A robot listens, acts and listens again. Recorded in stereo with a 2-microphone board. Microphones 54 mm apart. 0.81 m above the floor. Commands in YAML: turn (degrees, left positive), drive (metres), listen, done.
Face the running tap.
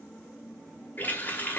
turn: 35
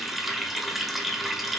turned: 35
done: "Facing the running tap."